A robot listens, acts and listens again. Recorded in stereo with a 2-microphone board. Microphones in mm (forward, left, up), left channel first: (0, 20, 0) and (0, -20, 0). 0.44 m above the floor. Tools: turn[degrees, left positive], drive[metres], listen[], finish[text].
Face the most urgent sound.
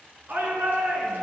Thought: The shout: about 60° right or 120° right.
Action: turn[-60]
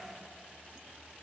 Action: listen[]
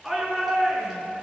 Action: finish[Found it: a shout, straight ahead, over 4 m away.]